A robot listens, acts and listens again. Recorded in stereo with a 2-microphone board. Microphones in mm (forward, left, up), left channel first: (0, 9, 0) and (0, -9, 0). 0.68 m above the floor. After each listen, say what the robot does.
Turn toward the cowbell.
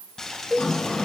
Turn 30° right.
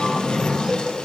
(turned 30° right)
Keep listening.
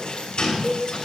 Turn 25° left.
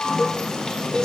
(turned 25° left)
Facing the cowbell.